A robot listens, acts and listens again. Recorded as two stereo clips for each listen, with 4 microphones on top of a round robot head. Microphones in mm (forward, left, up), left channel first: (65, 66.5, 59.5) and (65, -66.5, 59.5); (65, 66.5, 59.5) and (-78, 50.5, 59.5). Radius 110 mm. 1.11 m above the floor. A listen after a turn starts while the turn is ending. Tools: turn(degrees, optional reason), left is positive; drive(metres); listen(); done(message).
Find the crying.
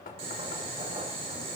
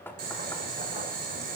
listen()
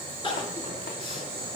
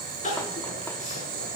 turn(degrees=40, reason="The crying: 40° left.")
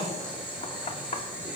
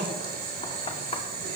listen()
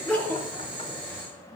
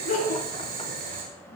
turn(degrees=10, reason="The crying is now 10° left.")
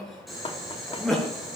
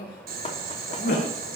done("Facing the crying.")